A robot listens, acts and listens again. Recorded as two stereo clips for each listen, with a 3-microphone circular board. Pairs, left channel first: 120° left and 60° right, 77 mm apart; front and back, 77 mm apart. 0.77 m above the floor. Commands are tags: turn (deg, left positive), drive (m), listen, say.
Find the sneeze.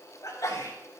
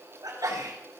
<turn deg="155"/>
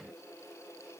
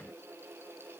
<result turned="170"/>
<turn deg="-15"/>
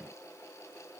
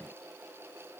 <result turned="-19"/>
<say>I heard a sneeze from this way, but can't make it out now.</say>